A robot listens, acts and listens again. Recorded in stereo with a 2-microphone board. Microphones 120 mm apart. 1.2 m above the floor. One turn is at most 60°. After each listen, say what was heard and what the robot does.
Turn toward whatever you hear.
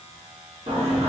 The singing: about 55° right or 125° right. Turn 55° right.
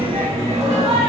So it is at 50° right. Turn 50° right.
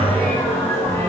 The singing is now 20° left. Turn 20° left.
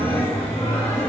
The singing is now 20° left. Turn 20° left.
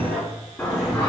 The singing is now 15° left. Turn 15° left.
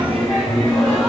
Found it: singing, straight ahead, 1 to 2 m away.